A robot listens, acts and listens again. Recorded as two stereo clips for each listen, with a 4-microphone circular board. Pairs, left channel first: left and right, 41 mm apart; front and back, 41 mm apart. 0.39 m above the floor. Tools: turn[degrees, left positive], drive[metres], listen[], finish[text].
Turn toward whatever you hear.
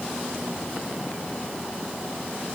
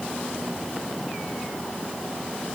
Action: listen[]
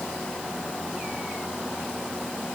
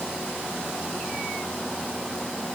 Action: listen[]
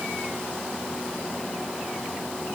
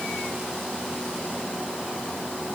Action: finish[I can't make out anything.]